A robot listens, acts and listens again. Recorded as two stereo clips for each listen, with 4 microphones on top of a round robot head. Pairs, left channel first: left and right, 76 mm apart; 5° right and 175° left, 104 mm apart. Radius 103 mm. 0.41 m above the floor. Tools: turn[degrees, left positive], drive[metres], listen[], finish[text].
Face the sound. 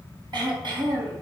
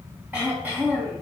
Thought: The throat clearing: 110° right.
Action: turn[-110]
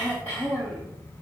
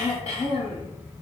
Thought: The throat clearing is now 15° left.
Action: turn[15]
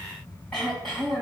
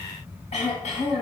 Action: finish[Facing the throat clearing.]